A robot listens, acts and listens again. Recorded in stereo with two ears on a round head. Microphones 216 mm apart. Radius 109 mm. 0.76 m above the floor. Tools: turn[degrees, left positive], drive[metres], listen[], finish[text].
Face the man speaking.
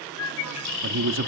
Thought: The man speaking: about 55° right or 125° right.
Action: turn[-55]
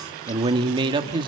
Thought: So it is at 25° right.
Action: turn[-25]
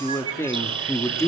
Thought: The man speaking is now 15° left.
Action: turn[15]
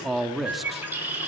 Action: finish[Found it: a man speaking, straight ahead, 1 to 2 m away.]